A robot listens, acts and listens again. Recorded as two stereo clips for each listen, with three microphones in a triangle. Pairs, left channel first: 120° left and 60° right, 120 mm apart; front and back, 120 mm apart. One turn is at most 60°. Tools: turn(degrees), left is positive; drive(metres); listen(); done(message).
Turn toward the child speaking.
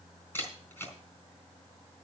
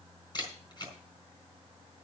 listen()
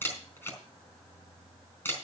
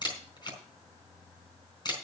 listen()
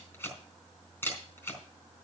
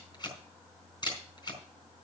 done("I can't make out a child speaking to turn to.")